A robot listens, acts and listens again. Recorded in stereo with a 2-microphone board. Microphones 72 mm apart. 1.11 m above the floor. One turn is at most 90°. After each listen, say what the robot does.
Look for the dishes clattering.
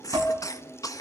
Turn 40° right.
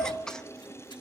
Keep listening.
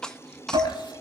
Turn 90° right.
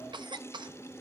Turn 15° right.
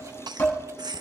Turn 25° left.
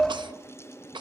Facing the dishes clattering, over 4 m away.